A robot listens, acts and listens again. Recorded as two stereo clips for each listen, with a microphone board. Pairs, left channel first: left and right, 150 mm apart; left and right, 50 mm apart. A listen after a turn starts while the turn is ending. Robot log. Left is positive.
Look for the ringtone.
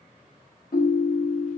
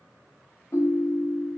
note: The ringtone: about 70° left or 110° left.
cmd yaw +70
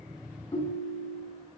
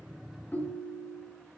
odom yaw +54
note: So it is at 40° left.
cmd yaw +40
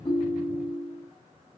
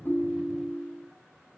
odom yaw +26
note: The ringtone is now 15° left.
cmd yaw +15
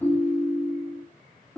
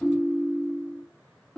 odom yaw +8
end: Found it: a ringtone, straight ahead.